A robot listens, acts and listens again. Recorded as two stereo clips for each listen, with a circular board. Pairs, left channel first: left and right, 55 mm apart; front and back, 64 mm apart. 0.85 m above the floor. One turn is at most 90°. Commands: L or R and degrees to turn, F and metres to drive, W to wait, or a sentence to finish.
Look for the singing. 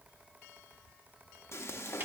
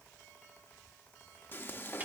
W
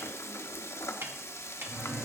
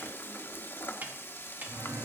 R90
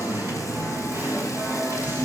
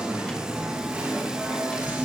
R90
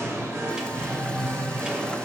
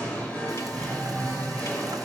R70
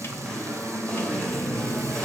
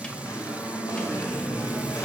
L15
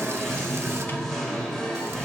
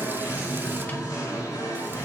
Facing the singing.